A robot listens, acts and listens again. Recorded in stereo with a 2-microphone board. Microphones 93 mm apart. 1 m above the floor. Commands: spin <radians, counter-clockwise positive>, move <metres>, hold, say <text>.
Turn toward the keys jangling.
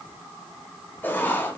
hold
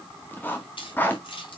spin 1.13
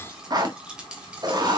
spin -0.17
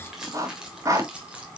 spin -0.26
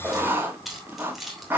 say Found it: keys jangling, straight ahead, 2 to 4 m away.